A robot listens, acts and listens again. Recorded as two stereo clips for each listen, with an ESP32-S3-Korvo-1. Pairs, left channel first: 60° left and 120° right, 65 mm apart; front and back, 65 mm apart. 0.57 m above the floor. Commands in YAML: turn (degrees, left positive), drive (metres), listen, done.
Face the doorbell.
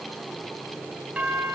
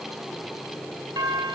turn: 170
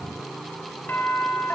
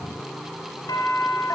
done: "Facing the doorbell."